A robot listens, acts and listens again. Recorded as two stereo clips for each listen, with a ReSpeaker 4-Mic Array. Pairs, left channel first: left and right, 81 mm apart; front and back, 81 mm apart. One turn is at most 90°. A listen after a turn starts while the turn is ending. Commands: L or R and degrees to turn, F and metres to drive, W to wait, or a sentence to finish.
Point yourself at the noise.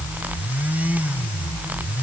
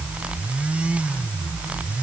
W
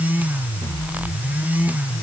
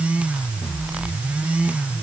W
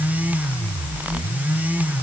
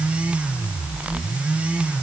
I can't make out anything.